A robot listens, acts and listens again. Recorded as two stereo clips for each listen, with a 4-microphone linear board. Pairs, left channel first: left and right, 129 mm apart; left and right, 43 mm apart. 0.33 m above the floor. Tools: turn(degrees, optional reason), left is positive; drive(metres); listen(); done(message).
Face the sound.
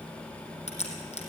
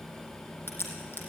turn(degrees=55, reason="The crack: about 55° left or 125° left.")
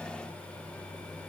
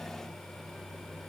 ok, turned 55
listen()
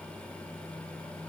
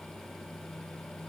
done("I heard a crack, but can't make it out now. It was about straight ahead or 70° left.")